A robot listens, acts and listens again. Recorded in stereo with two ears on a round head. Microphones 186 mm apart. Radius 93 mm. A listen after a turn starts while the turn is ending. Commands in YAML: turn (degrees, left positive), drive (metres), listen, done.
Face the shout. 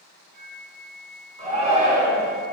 turn: -30
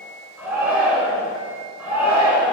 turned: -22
turn: -10
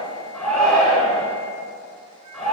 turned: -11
done: "Found it: a shout, straight ahead."